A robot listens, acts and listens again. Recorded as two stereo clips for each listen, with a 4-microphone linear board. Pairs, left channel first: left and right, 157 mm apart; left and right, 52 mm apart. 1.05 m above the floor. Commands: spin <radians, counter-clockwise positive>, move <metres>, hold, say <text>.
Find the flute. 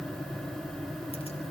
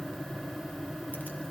hold
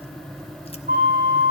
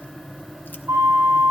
spin -1.22
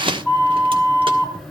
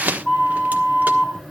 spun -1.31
say Found it: a flute, straight ahead.